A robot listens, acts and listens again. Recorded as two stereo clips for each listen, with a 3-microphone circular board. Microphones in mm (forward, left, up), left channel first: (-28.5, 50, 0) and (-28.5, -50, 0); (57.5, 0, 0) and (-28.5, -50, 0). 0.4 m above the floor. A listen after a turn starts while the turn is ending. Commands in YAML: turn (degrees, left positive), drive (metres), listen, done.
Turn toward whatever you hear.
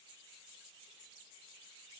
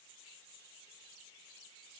listen: true
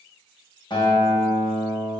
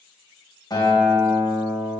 turn: 65
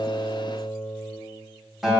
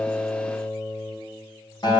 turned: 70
done: "Facing the guitar."